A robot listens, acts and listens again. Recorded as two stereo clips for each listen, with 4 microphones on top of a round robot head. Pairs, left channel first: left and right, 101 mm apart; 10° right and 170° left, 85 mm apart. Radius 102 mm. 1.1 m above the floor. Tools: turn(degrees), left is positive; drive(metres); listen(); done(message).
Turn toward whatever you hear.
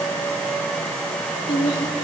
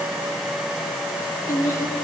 turn(degrees=45)
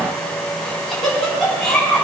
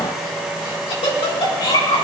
done("Facing the laughter, 2 to 4 m away.")